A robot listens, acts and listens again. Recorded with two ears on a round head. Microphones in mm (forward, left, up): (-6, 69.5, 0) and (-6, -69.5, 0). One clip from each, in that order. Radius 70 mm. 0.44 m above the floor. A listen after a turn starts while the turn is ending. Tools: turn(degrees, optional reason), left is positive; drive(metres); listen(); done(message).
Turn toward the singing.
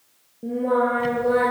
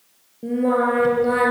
turn(degrees=-35, reason="The singing: about 35° right or 145° right.")
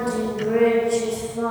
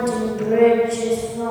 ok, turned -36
turn(degrees=10, reason="So it is at 10° left.")
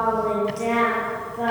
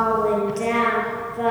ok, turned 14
done("Found it: singing, straight ahead.")